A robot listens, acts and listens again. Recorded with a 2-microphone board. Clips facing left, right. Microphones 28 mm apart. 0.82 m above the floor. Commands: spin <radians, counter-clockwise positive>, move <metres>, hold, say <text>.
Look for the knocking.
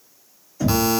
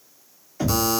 spin -0.79
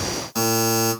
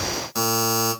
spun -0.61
hold
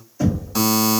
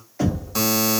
spin -1.57
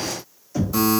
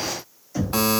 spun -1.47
say Found it: knocking, straight ahead.